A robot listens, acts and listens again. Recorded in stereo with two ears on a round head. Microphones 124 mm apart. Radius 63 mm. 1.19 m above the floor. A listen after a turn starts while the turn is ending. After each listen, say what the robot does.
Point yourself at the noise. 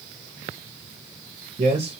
Turn 45° right.
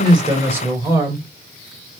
Turn 25° right.
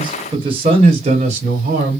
Turn 55° right.
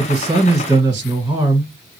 Turn 15° right.
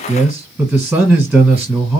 Facing the man speaking, 1 to 2 m away.